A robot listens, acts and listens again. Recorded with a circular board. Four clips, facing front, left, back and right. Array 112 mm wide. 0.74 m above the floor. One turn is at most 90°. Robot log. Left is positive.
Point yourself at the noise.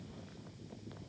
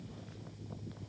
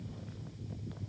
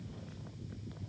cmd idle
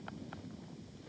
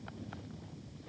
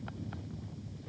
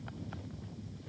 cmd idle
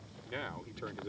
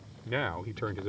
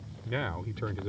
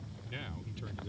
note: The man speaking: 105° left.
cmd yaw +90
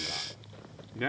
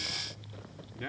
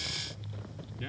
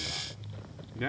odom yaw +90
note: The man speaking is now 25° right.
cmd yaw -25
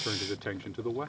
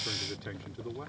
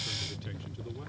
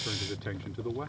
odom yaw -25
note: The man speaking is now 20° right.
cmd yaw -20
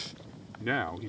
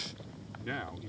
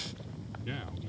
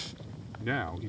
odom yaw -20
note: The man speaking is now 20° right.
cmd yaw -20
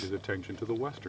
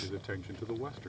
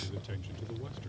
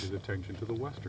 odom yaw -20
end: Found it: a man speaking, straight ahead.